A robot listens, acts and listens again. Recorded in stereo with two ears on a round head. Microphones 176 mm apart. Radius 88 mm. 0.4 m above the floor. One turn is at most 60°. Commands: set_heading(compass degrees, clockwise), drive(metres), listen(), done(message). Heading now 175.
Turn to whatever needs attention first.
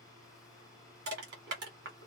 listen()
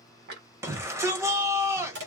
set_heading(190)
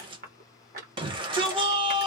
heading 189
set_heading(249)
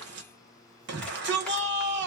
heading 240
set_heading(300)
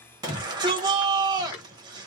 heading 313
set_heading(338)
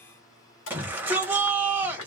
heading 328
set_heading(338)
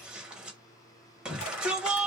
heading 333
done("Found it: a shout, straight ahead.")